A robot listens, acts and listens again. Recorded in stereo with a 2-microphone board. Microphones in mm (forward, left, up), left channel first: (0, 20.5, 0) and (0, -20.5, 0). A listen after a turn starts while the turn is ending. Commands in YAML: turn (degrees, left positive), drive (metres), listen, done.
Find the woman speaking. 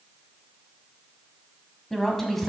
turn: 30
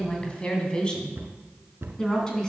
turn: 15
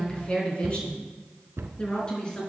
turn: 155
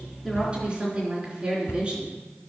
turn: -30
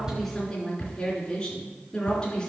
turn: 15
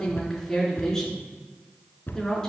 done: "Found it: a woman speaking, straight ahead."